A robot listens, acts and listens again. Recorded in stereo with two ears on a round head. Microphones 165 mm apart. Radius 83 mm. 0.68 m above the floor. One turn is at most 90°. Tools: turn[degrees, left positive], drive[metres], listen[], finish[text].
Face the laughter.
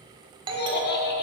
Thought: The laughter: about 60° left or 120° left.
Action: turn[60]
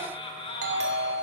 Thought: So it is at 35° left.
Action: turn[35]
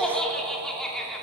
Action: finish[Facing the laughter.]